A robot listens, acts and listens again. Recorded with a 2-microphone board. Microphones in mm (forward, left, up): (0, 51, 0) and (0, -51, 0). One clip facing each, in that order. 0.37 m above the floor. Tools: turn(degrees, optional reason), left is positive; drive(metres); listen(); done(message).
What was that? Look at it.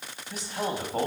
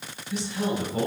turn(degrees=50, reason="The man speaking: about 50° left or 130° left.")
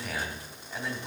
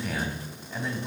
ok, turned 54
done("Found it: a man speaking, straight ahead, 2 to 4 m away.")